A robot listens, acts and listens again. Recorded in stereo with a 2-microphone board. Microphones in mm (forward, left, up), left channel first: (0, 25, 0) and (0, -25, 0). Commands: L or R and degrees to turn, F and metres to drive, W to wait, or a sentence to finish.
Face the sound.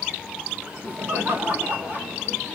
R45
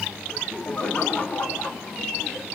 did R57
L30
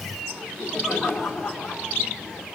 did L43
L10
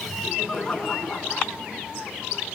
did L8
Facing the laughter, 2 to 4 m away.